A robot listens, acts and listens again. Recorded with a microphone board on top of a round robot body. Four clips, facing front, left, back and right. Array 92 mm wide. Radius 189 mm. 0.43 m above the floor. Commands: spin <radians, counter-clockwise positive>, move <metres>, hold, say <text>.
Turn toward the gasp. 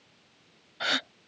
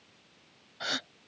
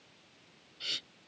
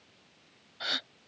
spin 0.17
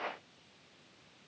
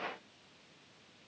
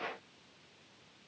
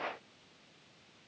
say Facing where the gasp came from. I can't hear it now.